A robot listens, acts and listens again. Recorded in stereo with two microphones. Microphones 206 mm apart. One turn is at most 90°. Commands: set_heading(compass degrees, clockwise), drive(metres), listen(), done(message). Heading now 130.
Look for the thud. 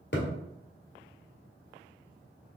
set_heading(70)
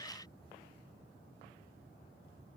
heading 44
listen()
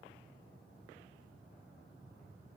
done("I heard a thud, but can't make it out now. It was about 25° right or 35° left.")